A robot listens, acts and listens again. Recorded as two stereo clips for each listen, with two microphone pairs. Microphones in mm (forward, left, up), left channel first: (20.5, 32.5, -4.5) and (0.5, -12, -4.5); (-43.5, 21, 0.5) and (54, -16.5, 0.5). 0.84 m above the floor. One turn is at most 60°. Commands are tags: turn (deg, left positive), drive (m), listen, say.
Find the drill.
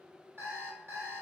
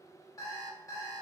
<listen/>
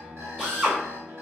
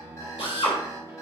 <turn deg="60"/>
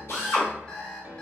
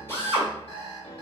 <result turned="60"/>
<turn deg="60"/>
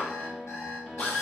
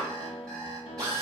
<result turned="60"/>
<turn deg="30"/>
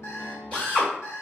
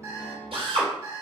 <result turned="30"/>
<say>Found it: a drill, straight ahead, 1 to 2 m away.</say>